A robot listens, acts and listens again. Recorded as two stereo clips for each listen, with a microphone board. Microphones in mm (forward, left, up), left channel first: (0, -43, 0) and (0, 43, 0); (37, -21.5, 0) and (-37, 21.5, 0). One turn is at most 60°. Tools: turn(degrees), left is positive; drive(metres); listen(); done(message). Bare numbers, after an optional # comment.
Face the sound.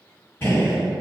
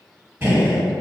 # The gunshot: 150° right.
turn(-60)
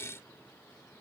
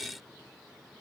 # Nothing new. It was at 90° right.
turn(-60)
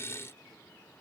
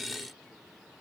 # Nothing new. It was at 30° right.
turn(-30)
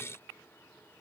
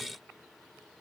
done("I heard a gunshot from this way, but can't make it out now.")